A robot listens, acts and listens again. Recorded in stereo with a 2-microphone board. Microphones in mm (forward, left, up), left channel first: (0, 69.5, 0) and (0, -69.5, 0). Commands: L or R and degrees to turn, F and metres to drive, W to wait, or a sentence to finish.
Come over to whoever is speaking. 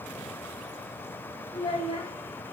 L30
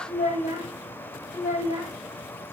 L110
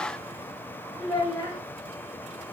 L30
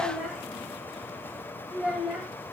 F1.0
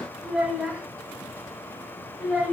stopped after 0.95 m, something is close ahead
I am next to the child speaking.